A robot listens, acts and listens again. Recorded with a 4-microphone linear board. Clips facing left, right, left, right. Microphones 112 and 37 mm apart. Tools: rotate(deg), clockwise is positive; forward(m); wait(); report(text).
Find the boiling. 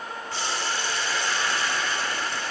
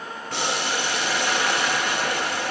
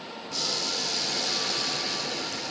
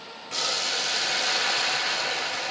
rotate(90)
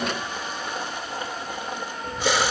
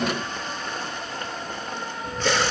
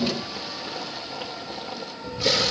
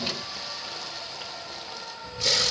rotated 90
rotate(-10)
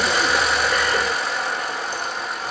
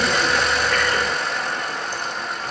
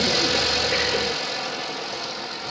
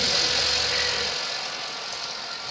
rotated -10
report("Facing the boiling, under 1 m away.")